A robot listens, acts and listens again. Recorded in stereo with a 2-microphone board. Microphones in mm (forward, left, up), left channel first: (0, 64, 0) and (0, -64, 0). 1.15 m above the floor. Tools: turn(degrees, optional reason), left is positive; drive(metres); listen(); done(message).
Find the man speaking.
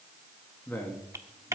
turn(degrees=30)
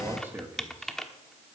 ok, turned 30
turn(degrees=-15, reason="So it is at 15° right.")
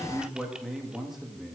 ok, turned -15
done("Facing the man speaking, 2 to 4 m away.")